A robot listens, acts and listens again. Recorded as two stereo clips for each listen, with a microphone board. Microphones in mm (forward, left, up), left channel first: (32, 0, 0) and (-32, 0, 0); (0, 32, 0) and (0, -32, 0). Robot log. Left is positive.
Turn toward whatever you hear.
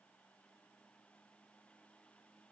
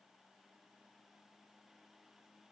cmd idle
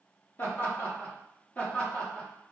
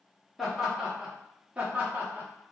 note: The laughter: 65° right.
cmd yaw -65
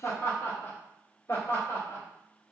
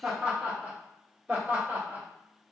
note: The laughter is now 30° right.
cmd yaw -30
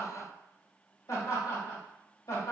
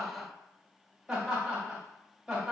end: Facing the laughter.